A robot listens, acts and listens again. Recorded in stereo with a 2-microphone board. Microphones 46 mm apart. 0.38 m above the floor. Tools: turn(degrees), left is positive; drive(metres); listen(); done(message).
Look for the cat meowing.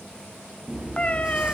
turn(degrees=30)
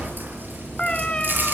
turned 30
turn(degrees=20)
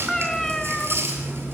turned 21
turn(degrees=10)
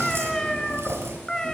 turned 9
turn(degrees=15)
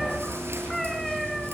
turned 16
done("Facing the cat meowing.")